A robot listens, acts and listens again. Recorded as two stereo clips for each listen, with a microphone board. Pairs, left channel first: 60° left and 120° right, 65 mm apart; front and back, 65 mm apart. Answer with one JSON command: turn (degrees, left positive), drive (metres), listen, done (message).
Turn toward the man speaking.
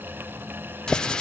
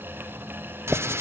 {"listen": true}
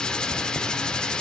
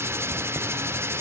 {"listen": true}
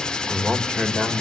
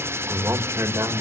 {"turn": 140}
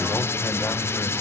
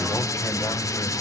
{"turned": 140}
{"turn": 10}
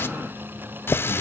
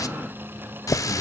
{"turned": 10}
{"listen": true}
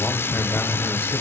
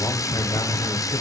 {"turn": -10}
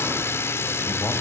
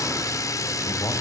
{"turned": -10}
{"listen": true}
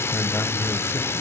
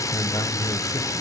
{"done": "Facing the man speaking, 2 to 4 m away."}